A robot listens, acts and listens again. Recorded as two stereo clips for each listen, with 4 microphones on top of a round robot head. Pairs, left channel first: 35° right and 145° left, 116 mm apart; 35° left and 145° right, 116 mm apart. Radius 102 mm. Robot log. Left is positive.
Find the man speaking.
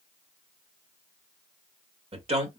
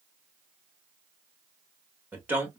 note: The man speaking: 145° left.
cmd yaw +145
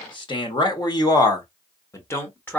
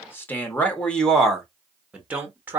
note: The man speaking is now 95° right.
cmd yaw -95
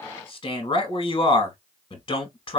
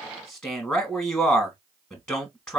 note: The man speaking is now 35° right.
cmd yaw -35
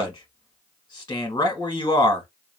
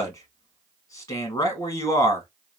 end: Found it: a man speaking, straight ahead.